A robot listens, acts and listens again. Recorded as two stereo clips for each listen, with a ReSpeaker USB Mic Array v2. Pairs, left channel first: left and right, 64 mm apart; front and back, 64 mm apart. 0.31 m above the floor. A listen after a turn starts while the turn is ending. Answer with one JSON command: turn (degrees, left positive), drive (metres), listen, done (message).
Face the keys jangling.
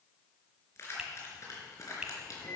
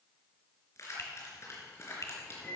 {"turn": 50}
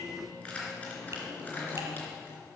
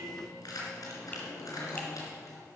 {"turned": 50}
{"turn": 25}
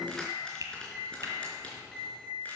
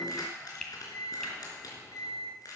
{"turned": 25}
{"turn": 20}
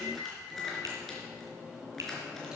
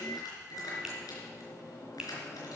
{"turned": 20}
{"done": "Found it: keys jangling, straight ahead, 2 to 4 m away."}